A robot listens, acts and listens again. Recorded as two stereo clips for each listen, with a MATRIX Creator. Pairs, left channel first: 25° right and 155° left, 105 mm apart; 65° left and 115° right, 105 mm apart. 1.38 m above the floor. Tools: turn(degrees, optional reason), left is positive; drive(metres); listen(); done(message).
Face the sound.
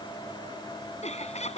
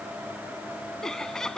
turn(degrees=-20, reason="The laughter: 20° right.")
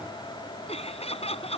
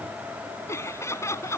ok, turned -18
done("Found it: laughter, straight ahead.")